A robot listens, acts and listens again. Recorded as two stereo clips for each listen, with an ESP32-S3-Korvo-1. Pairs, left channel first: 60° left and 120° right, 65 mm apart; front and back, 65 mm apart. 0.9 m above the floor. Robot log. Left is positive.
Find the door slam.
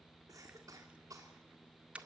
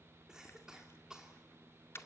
cmd idle
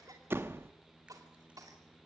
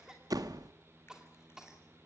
note: The door slam: 170° right.
cmd yaw -170
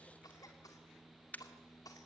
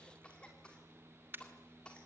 end: Facing where the door slam came from. I can't hear it now.